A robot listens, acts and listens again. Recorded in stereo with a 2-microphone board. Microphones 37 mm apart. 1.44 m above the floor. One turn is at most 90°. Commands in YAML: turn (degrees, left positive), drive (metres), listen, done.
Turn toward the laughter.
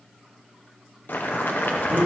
turn: -30
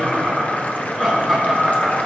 turn: 30
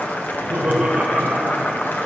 turn: -50
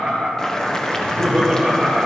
done: "Found it: laughter, straight ahead, 2 to 4 m away."